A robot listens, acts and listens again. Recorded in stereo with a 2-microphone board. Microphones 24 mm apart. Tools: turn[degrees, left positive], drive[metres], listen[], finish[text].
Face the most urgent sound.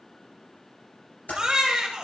Thought: The baby crying: about 30° right or 150° right.
Action: turn[-30]
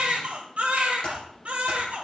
Thought: So it is at 115° right.
Action: turn[-115]
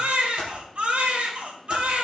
Thought: The baby crying is now 55° right.
Action: turn[-55]
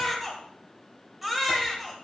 Action: finish[Found it: a baby crying, straight ahead.]